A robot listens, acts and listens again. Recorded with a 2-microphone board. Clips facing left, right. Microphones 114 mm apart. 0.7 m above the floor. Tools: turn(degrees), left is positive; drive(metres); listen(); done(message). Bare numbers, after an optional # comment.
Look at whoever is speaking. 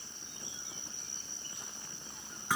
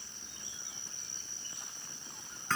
listen()
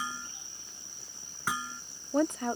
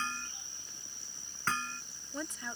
# The woman speaking: about 60° left or 120° left.
turn(60)
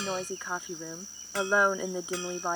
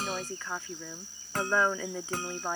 # So it is at 15° left.
turn(15)
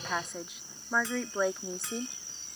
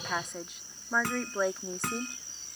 done("Facing the woman speaking.")